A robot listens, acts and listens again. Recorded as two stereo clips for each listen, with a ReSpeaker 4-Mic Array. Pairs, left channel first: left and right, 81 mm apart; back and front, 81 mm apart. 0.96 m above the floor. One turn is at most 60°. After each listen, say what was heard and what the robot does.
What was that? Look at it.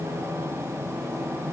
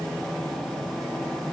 Keep listening.
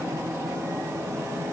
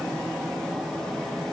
Keep listening.
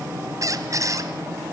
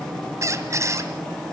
The squeak: 45° right. Turn 45° right.
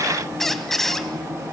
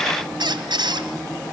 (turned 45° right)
Found it: a squeak, straight ahead, 1 to 2 m away.